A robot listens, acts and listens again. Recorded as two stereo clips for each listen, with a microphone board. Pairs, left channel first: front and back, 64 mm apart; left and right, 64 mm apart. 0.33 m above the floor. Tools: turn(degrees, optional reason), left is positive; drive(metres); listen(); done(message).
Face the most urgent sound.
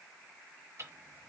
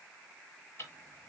listen()
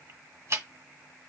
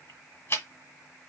listen()
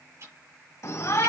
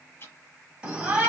turn(degrees=-15, reason="The shout: 15° right.")
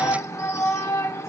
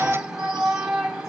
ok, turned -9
done("Facing the shout.")